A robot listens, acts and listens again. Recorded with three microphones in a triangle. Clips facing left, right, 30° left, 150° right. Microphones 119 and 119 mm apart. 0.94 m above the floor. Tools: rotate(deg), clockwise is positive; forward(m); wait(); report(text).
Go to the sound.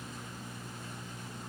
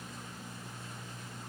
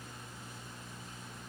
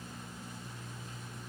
wait()
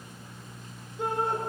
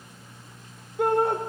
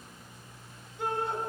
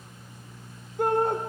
rotate(115)
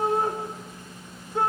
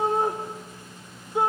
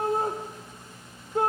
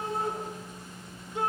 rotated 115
rotate(15)
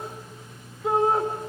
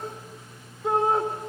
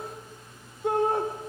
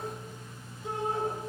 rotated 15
forward(1.0)
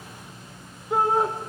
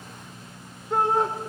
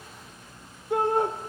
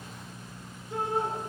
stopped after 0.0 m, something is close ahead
report("Something is in my way. I am facing the shout but have not reached it.")